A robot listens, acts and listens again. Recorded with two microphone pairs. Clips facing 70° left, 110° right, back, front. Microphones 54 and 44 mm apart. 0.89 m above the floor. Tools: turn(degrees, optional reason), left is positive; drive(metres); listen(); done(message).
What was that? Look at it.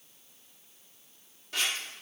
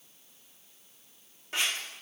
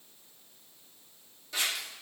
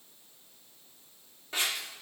turn(degrees=-50, reason="The scissors: 50° right.")
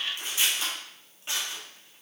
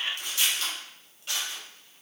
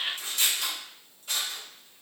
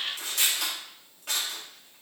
done("Found it: scissors, straight ahead, 1 to 2 m away.")